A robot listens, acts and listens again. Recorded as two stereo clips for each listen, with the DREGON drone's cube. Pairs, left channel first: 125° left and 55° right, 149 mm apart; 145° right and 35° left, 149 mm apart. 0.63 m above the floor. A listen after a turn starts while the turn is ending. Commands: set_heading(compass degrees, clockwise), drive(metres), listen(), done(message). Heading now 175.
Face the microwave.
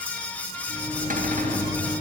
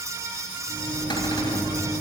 set_heading(75)
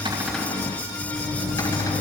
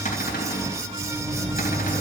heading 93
set_heading(78)
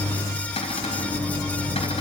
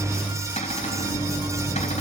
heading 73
done("Facing the microwave.")